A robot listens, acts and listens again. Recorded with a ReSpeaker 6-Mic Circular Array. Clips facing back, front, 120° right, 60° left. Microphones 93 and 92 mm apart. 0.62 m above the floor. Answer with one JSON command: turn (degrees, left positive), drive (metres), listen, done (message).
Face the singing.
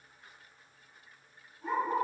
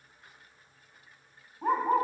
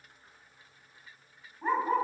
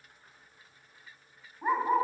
{"listen": true}
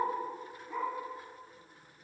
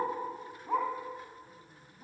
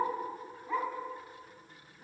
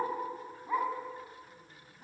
{"listen": true}
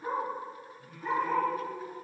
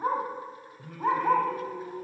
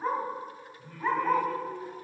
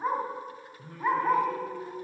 {"done": "Facing the singing, 1 to 2 m away."}